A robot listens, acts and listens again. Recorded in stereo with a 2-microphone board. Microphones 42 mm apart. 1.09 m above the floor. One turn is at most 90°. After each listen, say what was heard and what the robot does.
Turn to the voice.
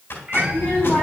The child speaking: about 50° left or 130° left. Turn 50° left.
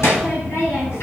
So it is at 80° left. Turn 80° left.
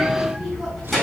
Found it: a child speaking, straight ahead, over 4 m away.